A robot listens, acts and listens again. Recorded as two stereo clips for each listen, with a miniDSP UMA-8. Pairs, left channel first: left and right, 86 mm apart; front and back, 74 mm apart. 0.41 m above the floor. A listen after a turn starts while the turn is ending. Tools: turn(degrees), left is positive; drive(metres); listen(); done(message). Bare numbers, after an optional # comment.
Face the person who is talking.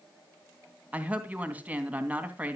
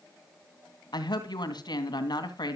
# The woman speaking: 20° right.
turn(-20)
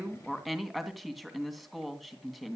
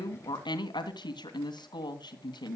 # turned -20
done("Facing the woman speaking.")